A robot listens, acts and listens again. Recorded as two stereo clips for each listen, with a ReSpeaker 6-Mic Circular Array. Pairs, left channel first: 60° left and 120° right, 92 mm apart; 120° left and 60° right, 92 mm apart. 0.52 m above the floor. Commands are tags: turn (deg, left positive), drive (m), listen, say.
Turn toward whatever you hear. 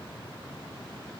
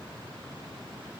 <listen/>
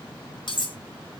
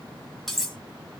<turn deg="35"/>
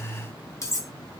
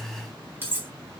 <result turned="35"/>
<say>Facing the cutlery clinking.</say>